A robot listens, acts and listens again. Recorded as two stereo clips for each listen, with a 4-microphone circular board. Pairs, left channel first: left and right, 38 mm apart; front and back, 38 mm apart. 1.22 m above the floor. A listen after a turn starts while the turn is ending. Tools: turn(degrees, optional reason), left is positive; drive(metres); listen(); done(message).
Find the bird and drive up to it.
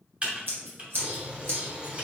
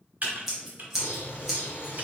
turn(degrees=-30, reason="The bird: 30° right.")
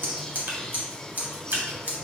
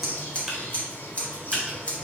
turn(degrees=15, reason="The bird is now 15° left.")
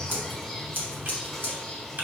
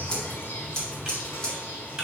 drive(metres=1.0)
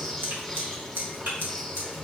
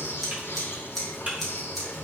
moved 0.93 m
drive(metres=1.0)
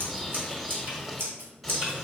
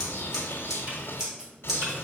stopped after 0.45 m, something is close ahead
done("I am next to the bird.")